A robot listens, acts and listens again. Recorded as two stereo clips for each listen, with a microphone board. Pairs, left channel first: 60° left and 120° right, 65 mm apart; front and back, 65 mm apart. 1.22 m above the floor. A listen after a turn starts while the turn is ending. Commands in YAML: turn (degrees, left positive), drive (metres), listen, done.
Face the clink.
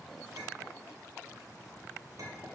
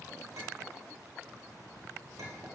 turn: -150
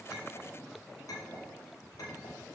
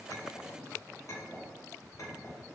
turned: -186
turn: 40
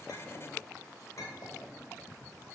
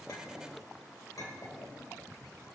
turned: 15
turn: 25
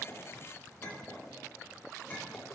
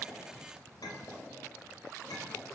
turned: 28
done: "Facing the clink, 2 to 4 m away."